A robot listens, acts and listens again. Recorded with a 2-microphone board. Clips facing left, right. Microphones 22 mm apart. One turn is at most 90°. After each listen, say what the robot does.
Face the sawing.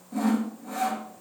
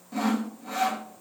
Turn 35° right.
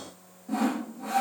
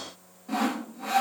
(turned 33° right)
Turn 90° right.
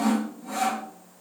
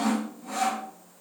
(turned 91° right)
Turn 15° right.
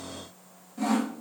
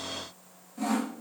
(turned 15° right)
Facing the sawing, 1 to 2 m away.